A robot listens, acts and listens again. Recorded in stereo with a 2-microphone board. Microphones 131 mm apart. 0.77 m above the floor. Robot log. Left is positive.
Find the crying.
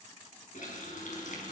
cmd idle
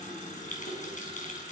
cmd idle
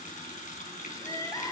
note: The crying: about 30° left or 150° left.
cmd yaw +30
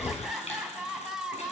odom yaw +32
end: Found it: crying, straight ahead.